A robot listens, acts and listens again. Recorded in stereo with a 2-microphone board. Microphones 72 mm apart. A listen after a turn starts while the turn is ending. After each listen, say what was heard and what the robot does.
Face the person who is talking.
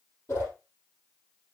Keep listening.
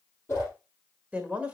The woman speaking: about 20° right or 160° right. Turn 20° right.
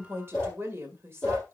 So it is at 140° right. Turn 140° right.
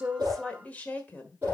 The woman speaking is now 25° left. Turn 25° left.
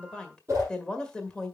The woman speaking is now 15° left. Turn 15° left.
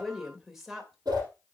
Found it: a woman speaking, straight ahead.